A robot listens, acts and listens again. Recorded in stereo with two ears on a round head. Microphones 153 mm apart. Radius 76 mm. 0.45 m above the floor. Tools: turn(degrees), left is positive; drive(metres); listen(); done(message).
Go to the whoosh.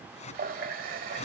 turn(degrees=40)
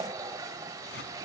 listen()
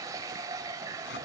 listen()
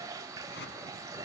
turn(degrees=100)
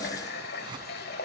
listen()
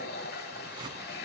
turn(degrees=-30)
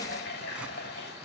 listen()
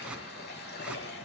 listen()
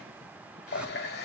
done("I heard a whoosh from this way, but can't make it out now. I did not reach it.")